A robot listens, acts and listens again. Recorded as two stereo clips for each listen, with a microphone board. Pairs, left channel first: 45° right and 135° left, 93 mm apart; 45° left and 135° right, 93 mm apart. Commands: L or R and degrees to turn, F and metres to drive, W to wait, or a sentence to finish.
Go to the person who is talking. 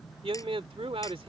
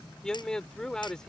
L125
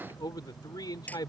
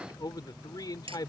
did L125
F1.0
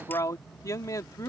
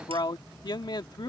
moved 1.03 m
L10
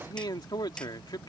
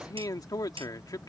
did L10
F1.0
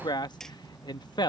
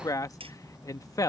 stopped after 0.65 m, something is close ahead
I am next to the man speaking.